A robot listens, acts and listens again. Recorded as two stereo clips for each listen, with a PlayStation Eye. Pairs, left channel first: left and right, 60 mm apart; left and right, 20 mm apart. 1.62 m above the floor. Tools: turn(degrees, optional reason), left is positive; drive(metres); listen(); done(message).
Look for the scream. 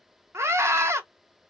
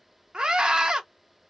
turn(degrees=-50, reason="The scream: about 50° right or 130° right.")
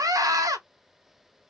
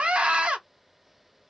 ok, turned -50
turn(degrees=-80, reason="So it is at 80° right.")
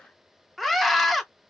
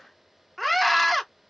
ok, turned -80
done("Facing the scream.")